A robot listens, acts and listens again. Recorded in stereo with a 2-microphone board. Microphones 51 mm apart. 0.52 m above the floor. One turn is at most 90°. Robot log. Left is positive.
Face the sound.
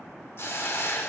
note: The hiss: about 55° left or 125° left.
cmd yaw +55
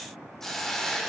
end: Facing the hiss, under 1 m away.